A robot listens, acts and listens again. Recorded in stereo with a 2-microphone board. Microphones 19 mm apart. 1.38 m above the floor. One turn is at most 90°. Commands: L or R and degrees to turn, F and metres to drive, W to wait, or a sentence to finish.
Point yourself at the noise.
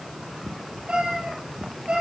R60
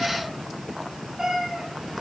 R15
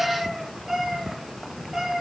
R15
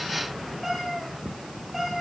Facing the cat meowing.